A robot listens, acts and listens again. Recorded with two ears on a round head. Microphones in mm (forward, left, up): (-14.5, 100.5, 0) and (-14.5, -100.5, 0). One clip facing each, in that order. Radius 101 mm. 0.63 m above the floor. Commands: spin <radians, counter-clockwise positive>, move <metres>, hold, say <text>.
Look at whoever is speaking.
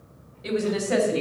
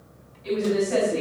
spin 1.31
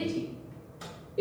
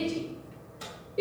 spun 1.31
say Found it: a woman speaking, straight ahead.